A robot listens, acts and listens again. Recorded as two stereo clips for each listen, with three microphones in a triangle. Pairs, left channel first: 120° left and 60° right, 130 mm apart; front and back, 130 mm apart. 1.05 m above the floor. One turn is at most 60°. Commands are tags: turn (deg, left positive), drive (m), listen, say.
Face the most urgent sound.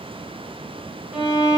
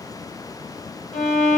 <listen/>
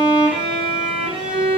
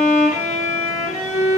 <listen/>
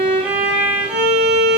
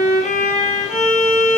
<say>I can't make out anything urgent, only a violin.</say>